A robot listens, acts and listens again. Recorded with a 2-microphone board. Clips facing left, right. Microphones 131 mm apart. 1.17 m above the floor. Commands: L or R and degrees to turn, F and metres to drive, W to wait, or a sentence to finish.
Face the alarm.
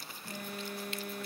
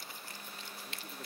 L60
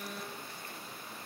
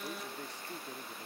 Facing the alarm.